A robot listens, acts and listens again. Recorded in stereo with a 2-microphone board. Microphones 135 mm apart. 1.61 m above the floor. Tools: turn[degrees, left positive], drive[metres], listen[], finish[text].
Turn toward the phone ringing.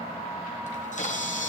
Action: listen[]
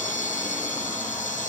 Action: listen[]
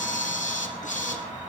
Action: finish[I can't make out a phone ringing to turn to.]